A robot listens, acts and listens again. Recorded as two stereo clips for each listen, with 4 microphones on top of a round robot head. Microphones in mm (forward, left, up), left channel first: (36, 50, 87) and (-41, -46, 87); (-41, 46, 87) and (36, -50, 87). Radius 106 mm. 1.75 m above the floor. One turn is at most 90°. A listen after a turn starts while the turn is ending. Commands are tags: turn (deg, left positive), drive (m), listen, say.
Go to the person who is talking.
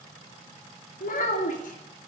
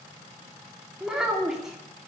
<turn deg="35"/>
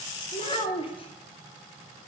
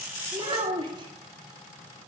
<drive m="1.0"/>
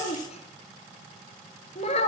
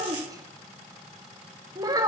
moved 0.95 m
<turn deg="10"/>
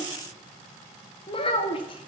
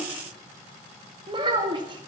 <drive m="1.0"/>
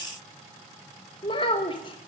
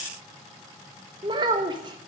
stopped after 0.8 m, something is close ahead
<say>Arrived at the child speaking, straight ahead.</say>